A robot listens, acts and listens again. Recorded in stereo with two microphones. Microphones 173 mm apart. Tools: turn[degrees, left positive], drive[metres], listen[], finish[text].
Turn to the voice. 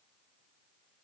Action: listen[]
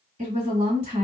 Thought: The woman speaking: about 40° right or 140° right.
Action: turn[-40]
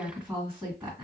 Action: finish[Facing the woman speaking, 1 to 2 m away.]